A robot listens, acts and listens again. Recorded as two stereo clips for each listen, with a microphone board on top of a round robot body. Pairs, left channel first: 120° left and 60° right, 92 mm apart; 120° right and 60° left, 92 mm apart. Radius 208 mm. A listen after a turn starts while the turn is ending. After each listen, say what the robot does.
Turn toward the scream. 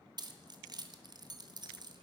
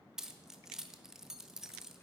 Keep listening.
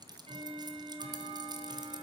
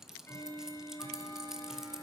Keep listening.
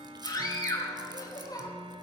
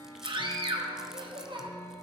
Turn 75° left.
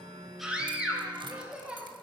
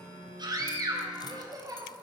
Turn 20° left.
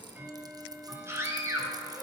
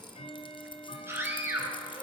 Found it: a scream, straight ahead.